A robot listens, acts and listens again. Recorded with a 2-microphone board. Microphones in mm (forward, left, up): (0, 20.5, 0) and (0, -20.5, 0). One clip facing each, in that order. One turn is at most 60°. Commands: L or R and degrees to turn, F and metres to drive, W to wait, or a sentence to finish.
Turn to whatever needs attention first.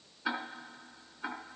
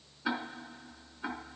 W
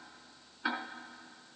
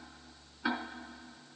W
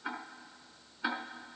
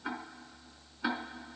I can't make out anything urgent, only ticking.